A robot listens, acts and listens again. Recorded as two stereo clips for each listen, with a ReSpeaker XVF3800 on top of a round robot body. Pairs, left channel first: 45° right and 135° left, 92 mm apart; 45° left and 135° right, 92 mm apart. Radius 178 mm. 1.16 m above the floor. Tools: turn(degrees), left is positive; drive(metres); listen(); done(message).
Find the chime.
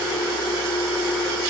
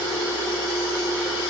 listen()
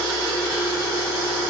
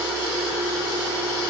listen()
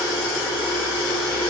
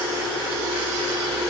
done("I can't make out a chime to turn to.")